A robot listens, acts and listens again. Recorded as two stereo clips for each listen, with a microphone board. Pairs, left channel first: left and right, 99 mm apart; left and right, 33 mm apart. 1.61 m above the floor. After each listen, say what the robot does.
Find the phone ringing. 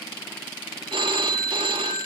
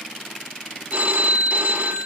Turn 55° right.
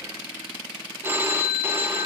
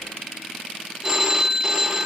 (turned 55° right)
Turn 25° right.
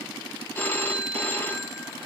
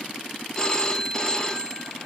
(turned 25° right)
Turn 20° left.
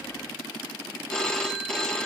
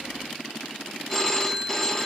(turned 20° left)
Turn 10° left.
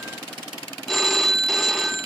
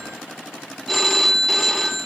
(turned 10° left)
Found it: a phone ringing, straight ahead.